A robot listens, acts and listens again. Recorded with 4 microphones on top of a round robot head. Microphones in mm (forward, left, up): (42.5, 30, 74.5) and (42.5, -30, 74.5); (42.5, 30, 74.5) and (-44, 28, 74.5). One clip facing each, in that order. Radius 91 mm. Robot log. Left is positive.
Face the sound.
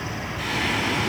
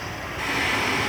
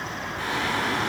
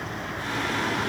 note: The singing: 30° right.
cmd yaw -30
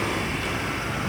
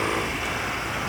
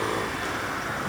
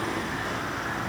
cmd idle
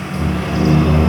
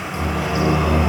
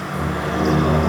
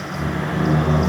note: The singing is now 15° right.
cmd yaw -15
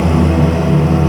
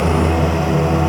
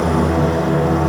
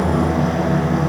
note: The singing is now 10° right.
cmd yaw -10
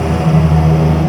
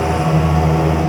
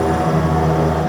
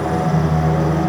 note: The singing is now 15° right.
cmd yaw -15
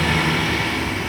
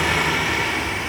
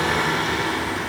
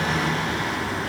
note: The singing is now 20° right.
cmd yaw -20
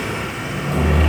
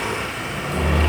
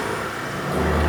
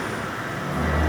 end: Facing the singing.